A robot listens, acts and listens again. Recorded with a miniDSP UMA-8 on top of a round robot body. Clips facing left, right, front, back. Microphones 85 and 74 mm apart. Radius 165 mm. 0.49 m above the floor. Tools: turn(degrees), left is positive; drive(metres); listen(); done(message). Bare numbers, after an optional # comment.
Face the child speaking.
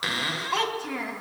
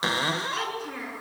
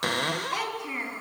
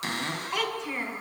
# The child speaking: 80° left.
turn(80)
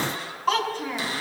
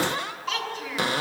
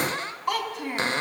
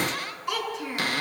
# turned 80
# The child speaking is now 40° left.
turn(40)
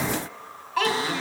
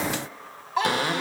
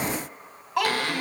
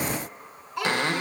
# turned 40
# The child speaking is now 20° right.
turn(-20)
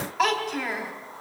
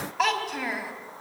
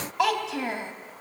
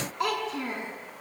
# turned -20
done("Facing the child speaking.")